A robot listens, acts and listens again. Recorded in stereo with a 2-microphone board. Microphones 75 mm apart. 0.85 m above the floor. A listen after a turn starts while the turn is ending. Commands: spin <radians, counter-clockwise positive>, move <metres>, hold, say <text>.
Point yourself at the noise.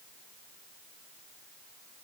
hold
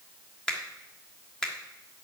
spin 0.52
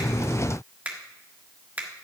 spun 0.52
spin -0.35
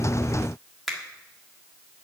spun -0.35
say Found it: a finger snap, straight ahead, 1 to 2 m away.